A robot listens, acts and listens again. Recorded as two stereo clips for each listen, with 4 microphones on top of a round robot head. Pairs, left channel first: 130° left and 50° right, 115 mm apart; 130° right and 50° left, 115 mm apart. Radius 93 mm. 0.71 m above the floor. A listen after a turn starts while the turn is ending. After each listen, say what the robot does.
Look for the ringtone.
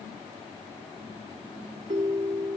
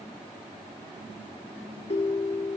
Turn 95° right.
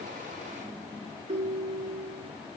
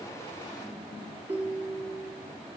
Turn 25° right.
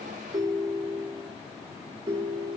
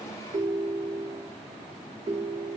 Facing the ringtone, 2 to 4 m away.